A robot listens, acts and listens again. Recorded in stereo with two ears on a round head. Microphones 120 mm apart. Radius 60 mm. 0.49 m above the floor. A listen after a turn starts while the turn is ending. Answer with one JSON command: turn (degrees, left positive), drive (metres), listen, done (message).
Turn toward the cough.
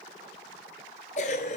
{"turn": 55}
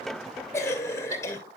{"turn": 25}
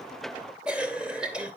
{"turn": -10}
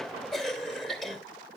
{"done": "Facing the cough."}